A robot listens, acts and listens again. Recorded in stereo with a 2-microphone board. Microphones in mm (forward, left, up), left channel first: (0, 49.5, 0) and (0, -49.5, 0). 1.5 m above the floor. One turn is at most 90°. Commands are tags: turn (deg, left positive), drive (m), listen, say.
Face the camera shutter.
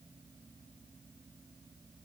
<listen/>
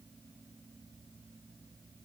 <listen/>
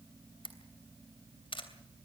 <turn deg="60"/>
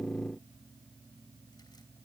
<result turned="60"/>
<listen/>
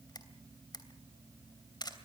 <turn deg="50"/>
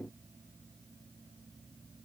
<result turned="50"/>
<listen/>
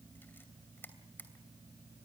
<turn deg="20"/>
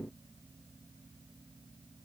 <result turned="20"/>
<listen/>
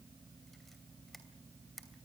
<say>Found it: a camera shutter, straight ahead, 2 to 4 m away.</say>